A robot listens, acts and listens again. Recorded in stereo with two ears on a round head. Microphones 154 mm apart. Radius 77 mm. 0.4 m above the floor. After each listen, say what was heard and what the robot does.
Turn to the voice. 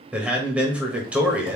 Turn 30° right.
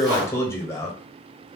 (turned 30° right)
So it is at 20° left. Turn 20° left.
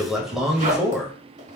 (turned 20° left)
Facing the man speaking, 1 to 2 m away.